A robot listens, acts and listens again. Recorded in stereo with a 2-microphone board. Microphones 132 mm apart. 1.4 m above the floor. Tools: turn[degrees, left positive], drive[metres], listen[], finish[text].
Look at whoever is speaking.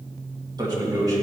Thought: The man speaking: about 25° right or 155° right.
Action: turn[-25]
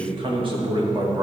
Thought: The man speaking: about 30° right or 150° right.
Action: turn[-30]
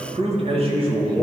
Thought: So it is at 135° right.
Action: turn[-135]
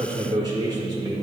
Thought: The man speaking is now 30° right.
Action: turn[-30]
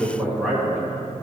Action: finish[Found it: a man speaking, straight ahead.]